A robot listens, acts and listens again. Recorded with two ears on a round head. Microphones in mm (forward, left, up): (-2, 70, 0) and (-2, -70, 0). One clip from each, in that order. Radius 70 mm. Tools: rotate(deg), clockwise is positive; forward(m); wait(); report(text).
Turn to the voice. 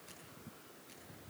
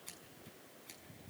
wait()
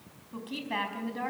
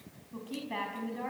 rotate(-30)
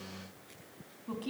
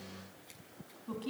report("Found it: a woman speaking, straight ahead.")